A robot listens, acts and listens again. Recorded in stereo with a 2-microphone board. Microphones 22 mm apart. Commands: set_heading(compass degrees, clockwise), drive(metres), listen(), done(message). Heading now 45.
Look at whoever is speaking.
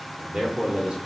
set_heading(85)
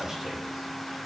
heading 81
listen()
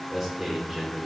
done("Found it: a man speaking, straight ahead.")